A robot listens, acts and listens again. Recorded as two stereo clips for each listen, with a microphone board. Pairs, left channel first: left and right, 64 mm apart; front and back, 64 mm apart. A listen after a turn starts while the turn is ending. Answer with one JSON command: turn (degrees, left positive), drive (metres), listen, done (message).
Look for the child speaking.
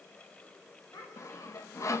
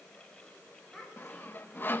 {"turn": 90}
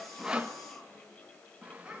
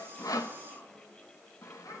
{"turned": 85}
{"done": "Found it: a child speaking, straight ahead, over 4 m away."}